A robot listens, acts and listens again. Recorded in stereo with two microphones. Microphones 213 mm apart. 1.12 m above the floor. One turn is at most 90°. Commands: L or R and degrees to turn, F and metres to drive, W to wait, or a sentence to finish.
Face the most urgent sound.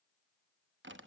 W
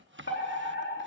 L60
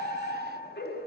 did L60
L55
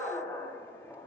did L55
L10
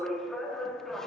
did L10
Found it: a fire alarm, straight ahead, 2 to 4 m away.